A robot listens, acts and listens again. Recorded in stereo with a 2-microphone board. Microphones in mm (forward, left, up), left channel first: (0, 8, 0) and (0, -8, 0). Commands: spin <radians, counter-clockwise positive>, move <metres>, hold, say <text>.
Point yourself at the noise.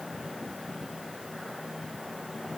hold
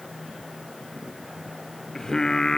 spin 0.70
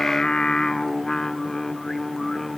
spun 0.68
spin 0.26
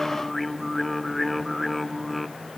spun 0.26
say Found it: singing, straight ahead, 1 to 2 m away.